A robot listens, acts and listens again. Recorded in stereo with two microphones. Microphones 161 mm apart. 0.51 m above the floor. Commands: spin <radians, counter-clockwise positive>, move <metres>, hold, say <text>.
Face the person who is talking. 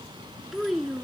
spin 0.52
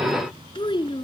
spin 2.62
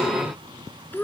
spin 0.17
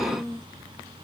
say Facing the child speaking.